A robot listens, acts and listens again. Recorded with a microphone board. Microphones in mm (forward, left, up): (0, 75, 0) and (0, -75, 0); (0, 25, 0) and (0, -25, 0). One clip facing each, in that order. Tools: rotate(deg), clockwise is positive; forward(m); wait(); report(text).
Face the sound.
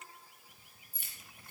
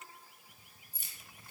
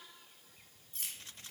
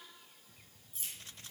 rotate(-55)
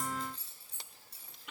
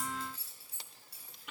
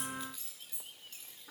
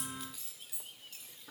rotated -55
rotate(10)
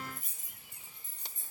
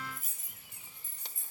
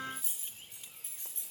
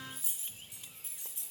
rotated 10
rotate(10)
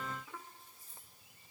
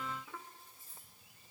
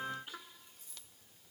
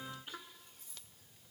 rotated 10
report("Found it: keys jangling, straight ahead, 2 to 4 m away.")